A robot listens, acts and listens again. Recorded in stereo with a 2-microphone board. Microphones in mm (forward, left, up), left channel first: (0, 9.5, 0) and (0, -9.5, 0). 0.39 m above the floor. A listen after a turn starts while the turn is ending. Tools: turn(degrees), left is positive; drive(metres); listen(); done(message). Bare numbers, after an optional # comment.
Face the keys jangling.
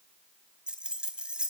# The keys jangling: about 70° right or 110° right.
turn(-70)
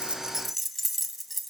done("Facing the keys jangling, 2 to 4 m away.")